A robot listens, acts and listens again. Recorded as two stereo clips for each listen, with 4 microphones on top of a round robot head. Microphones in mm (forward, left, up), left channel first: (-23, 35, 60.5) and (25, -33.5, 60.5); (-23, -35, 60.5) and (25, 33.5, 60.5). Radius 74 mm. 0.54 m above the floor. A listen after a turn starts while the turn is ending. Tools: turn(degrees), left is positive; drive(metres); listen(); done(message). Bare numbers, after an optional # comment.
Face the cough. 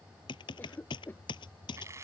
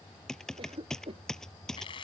# The cough: 55° left.
turn(55)
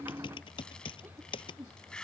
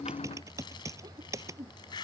# The cough is now 15° left.
turn(15)
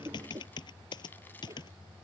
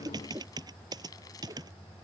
done("Facing the cough.")